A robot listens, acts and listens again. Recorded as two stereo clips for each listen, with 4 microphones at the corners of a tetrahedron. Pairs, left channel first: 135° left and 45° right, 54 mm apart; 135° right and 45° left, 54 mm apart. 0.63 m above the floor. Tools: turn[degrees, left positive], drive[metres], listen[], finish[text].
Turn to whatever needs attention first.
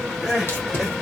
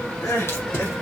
Thought: The crying: 125° right.
Action: turn[-125]
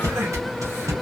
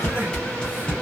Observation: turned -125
Action: listen[]
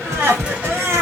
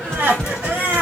Thought: The crying is now 10° right.
Action: turn[-10]
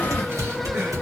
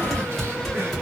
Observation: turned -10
Action: listen[]
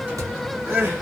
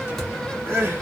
Action: finish[Found it: crying, straight ahead.]